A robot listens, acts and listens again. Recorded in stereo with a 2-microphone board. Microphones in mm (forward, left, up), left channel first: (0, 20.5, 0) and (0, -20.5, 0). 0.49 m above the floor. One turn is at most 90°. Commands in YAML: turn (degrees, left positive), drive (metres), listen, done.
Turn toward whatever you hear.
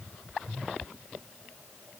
listen: true
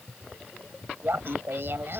turn: -65
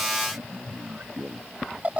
turn: -35
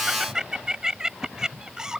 turn: -15
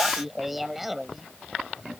done: "Facing the laughter."